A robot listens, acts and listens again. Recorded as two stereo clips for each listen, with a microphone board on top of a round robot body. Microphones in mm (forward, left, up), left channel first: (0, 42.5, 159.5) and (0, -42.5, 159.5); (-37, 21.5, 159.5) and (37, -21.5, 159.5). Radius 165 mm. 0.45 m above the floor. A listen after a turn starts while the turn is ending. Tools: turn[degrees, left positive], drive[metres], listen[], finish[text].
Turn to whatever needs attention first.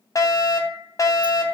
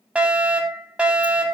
Thought: The fire alarm: 45° left.
Action: turn[45]
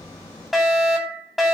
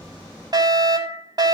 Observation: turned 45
Action: finish[Found it: a fire alarm, straight ahead.]